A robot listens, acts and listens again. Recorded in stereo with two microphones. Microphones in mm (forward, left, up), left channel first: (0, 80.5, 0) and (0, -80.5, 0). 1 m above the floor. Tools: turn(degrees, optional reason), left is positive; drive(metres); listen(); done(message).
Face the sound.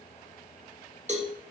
turn(degrees=-45, reason="The cowbell: about 45° right or 135° right.")
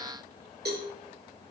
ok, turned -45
turn(degrees=-90, reason="So it is at 90° right.")
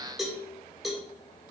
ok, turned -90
done("Facing the cowbell.")